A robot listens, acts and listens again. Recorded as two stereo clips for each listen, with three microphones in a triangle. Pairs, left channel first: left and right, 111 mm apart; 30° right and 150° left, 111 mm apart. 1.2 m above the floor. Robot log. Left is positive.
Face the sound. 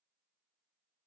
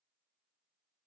cmd idle
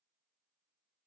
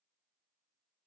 cmd idle
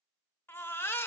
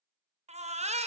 note: The baby crying: 160° left.
cmd yaw +160
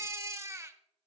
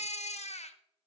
note: The baby crying is now 25° right.
cmd yaw -25
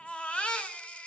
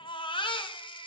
note: The baby crying is now 10° left.
cmd yaw +10
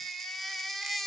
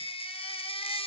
end: Facing the baby crying.